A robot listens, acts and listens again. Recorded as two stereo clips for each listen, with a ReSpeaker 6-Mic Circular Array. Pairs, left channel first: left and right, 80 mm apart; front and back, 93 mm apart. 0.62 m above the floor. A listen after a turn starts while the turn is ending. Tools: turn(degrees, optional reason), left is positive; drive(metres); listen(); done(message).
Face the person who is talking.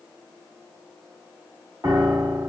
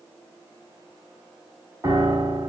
listen()
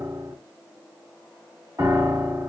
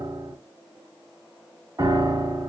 listen()
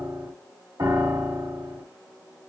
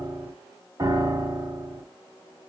done("I can't make out anyone speaking, only a piano.")